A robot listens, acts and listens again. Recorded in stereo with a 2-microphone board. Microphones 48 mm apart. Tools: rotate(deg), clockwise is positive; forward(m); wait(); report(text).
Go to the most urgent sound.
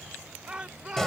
rotate(20)
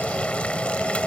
wait()
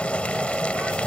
wait()
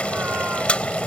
report("I heard a shout, but can't make it out now. It was about straight ahead or 140° right. I did not reach it.")